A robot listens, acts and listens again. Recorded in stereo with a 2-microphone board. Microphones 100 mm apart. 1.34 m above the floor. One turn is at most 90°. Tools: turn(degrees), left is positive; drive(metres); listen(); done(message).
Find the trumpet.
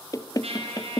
turn(degrees=-90)
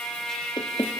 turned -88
done("Found it: a trumpet, straight ahead.")